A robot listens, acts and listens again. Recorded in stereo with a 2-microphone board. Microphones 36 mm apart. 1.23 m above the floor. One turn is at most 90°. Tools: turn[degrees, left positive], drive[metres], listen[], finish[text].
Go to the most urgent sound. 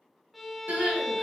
Action: turn[-90]
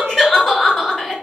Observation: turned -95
Thought: So it is at 10° left.
Action: turn[10]
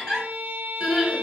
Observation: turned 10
Action: drive[1.0]
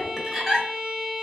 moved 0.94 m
Thought: The crying is now 10° right.
Action: turn[-10]
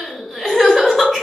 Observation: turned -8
Action: drive[1.0]
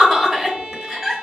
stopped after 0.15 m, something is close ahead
Action: finish[I am next to the crying.]